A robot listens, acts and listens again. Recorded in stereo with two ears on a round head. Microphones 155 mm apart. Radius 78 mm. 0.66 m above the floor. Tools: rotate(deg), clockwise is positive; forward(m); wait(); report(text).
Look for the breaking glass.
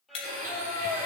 rotate(-35)
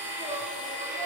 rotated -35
wait()
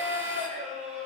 report("I heard breaking glass, but can't make it out now. It was about straight ahead or 110° left.")